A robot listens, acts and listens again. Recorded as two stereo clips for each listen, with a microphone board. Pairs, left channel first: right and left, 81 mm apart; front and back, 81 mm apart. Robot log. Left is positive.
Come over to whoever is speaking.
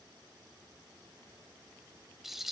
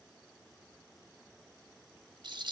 cmd idle
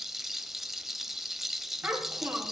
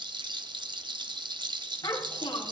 note: The child speaking: 30° left.
cmd yaw +30
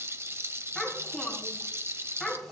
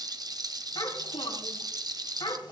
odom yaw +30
cmd fwd 1.0
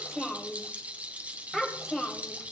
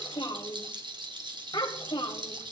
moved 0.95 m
cmd fwd 1.0
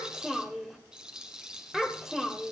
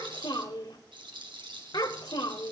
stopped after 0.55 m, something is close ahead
end: I am next to the child speaking.